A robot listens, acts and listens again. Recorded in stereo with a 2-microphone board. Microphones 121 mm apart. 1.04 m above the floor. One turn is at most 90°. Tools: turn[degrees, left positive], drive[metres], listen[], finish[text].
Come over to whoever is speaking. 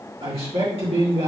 Thought: The man speaking: about 55° right or 125° right.
Action: turn[-55]
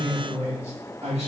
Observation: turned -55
Thought: So it is at 70° right.
Action: turn[-70]
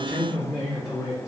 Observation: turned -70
Action: drive[1.0]
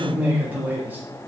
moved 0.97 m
Thought: The man speaking is now 15° right.
Action: turn[-15]
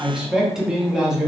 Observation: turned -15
Action: drive[1.0]
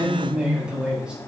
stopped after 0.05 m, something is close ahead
Thought: The man speaking is now 10° right.
Action: turn[-10]
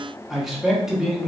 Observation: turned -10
Action: finish[Arrived at the man speaking, straight ahead.]